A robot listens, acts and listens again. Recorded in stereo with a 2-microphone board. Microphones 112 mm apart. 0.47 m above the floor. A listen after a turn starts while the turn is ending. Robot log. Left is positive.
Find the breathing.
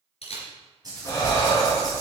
note: The breathing: about 25° left or 155° left.
cmd yaw +25
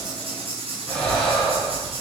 end: Facing the breathing, 2 to 4 m away.